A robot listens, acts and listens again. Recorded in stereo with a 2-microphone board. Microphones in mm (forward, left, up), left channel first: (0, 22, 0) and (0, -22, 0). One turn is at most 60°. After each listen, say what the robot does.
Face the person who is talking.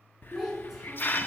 Turn 30° right.
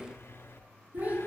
Turn 60° right.
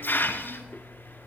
Turn 60° right.
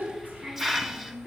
Turn 40° right.
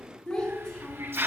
Turn 15° left.
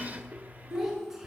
Found it: a child speaking, straight ahead.